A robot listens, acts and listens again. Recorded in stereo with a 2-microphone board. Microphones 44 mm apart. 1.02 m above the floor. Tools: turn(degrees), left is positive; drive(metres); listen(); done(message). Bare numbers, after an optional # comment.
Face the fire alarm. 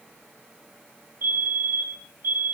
# The fire alarm: about 65° right or 115° right.
turn(-65)
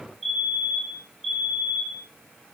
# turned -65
done("Facing the fire alarm.")